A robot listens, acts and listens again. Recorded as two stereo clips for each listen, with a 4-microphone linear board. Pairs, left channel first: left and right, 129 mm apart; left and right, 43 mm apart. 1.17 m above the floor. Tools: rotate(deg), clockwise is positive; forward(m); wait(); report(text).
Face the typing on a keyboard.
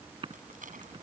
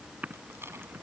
rotate(40)
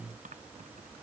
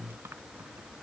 wait()
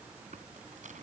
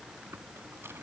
wait()
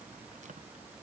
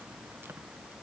report("I heard typing on a keyboard, but can't make it out now. It was about straight ahead or 100° right.")